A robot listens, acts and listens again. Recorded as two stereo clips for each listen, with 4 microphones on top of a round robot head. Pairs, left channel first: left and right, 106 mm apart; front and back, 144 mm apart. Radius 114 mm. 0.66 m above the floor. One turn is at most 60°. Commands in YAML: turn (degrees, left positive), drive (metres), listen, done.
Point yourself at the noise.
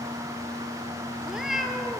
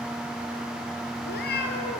done: "Facing the cat meowing, 2 to 4 m away."